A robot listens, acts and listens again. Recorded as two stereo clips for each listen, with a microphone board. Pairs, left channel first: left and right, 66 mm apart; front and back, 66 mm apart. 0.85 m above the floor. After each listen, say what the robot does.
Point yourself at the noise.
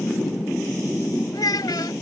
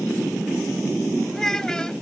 Turn 80° left.
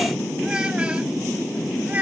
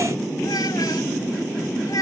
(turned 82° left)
Turn 25° right.
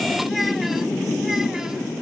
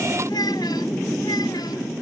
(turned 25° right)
Keep listening.
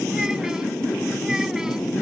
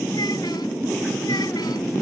Keep listening.
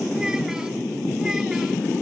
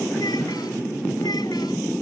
Facing where the child speaking came from. I can't hear it now.